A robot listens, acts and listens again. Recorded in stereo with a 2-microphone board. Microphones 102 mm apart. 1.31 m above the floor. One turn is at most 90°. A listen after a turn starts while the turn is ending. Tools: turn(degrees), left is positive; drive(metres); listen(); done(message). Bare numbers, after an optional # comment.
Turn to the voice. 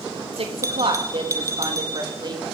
# The woman speaking: about 40° right or 140° right.
turn(-40)
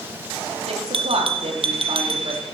# So it is at 115° right.
turn(-90)
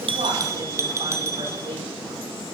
# Nothing new. It was at 25° right.
turn(-25)
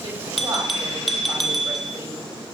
listen()
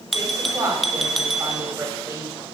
# The woman speaking is now 25° right.
turn(-25)
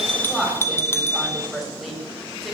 done("Found it: a woman speaking, straight ahead.")